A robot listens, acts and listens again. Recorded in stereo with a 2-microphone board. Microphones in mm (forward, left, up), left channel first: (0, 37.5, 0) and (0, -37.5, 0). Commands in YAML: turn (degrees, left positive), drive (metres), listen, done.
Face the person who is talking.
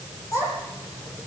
turn: 40
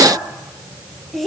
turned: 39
done: "Facing the child speaking."